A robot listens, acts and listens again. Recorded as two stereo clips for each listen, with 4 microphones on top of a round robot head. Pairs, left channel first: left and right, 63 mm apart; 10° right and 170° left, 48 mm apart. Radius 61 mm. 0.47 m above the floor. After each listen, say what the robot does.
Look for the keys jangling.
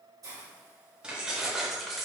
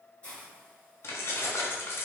Facing the keys jangling.